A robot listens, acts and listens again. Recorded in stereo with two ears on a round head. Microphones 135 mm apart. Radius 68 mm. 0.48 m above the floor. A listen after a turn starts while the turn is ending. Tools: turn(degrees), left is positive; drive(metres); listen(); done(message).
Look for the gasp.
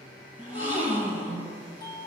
turn(degrees=-50)
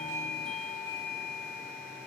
listen()
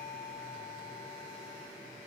done("I heard a gasp, but can't make it out now. It was about straight ahead or 80° right.")